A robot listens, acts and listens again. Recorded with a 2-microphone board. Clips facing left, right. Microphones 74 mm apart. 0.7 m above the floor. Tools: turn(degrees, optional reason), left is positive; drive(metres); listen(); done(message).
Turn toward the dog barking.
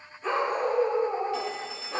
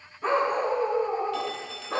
turn(degrees=-65, reason="The dog barking: about 65° right or 115° right.")
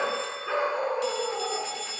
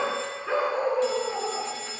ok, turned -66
done("Facing the dog barking.")